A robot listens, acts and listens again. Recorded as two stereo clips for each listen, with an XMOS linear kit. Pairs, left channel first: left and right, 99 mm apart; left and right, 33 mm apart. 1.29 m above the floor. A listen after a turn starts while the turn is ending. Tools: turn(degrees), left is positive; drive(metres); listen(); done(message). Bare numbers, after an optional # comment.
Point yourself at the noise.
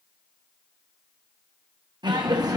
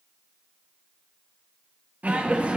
# The laughter: about 40° right or 140° right.
turn(-40)
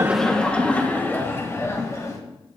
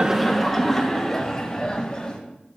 # So it is at 35° left.
turn(35)
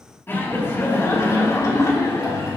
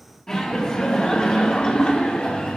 # The laughter is now 35° left.
turn(35)
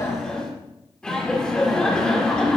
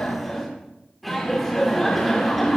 # The laughter is now 10° left.
turn(10)
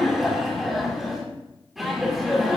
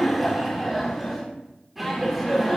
done("Facing the laughter, 2 to 4 m away.")